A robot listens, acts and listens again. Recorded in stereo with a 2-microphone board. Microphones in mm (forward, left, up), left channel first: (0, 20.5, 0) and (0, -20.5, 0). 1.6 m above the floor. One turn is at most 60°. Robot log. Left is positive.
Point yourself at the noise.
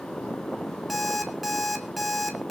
cmd yaw +30
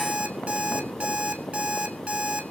note: So it is at 30° right.
cmd yaw -30
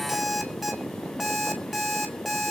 end: Found it: an alarm clock, straight ahead.